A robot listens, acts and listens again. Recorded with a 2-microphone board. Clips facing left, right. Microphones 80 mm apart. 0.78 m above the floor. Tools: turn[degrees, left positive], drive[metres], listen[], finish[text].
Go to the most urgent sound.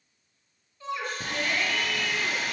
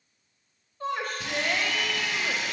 Thought: The shout: about 50° right or 130° right.
Action: turn[-50]
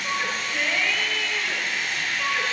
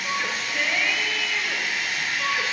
Action: drive[1.0]
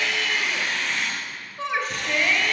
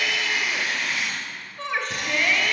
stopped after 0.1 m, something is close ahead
Action: finish[Blocked. The shout is further on, straight ahead.]